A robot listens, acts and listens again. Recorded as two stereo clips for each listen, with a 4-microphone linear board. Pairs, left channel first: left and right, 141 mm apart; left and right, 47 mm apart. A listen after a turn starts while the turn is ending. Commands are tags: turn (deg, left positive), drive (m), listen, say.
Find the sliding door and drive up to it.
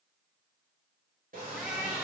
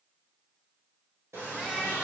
<turn deg="-75"/>
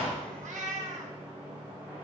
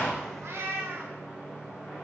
<turn deg="-15"/>
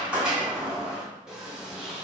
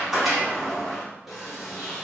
<drive m="1.0"/>
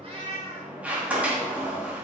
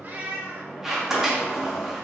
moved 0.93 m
<turn deg="-10"/>
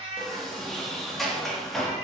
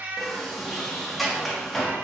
<drive m="1.0"/>
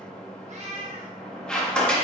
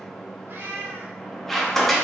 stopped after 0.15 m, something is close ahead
<say>Arrived at the sliding door, straight ahead.</say>